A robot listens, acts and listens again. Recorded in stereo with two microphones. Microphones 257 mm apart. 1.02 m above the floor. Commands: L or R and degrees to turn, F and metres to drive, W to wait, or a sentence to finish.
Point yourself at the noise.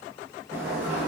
R30
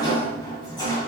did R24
L15
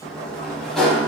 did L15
Facing the sliding door, 2 to 4 m away.